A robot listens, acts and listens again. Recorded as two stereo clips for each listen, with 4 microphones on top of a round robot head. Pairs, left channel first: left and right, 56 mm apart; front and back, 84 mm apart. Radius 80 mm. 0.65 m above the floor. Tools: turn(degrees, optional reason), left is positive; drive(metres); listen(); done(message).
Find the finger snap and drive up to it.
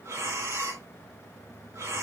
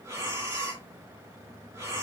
listen()
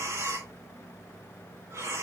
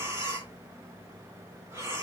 listen()
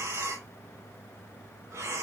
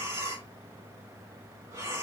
done("I can't make out a finger snap to turn to.")